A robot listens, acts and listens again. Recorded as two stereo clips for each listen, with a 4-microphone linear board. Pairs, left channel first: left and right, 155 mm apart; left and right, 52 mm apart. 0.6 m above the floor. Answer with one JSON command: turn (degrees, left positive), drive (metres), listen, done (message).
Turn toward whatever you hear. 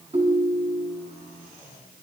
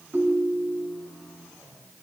{"turn": -50}
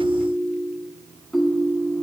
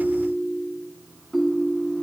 {"done": "Facing the ringtone."}